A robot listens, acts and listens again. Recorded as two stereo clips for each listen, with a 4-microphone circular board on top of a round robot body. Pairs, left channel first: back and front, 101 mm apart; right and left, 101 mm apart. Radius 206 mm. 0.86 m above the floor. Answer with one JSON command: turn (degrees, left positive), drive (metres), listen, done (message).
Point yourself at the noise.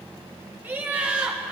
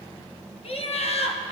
{"turn": -80}
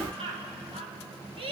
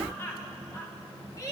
{"turn": -30}
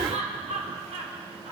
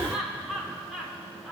{"done": "Facing the laughter."}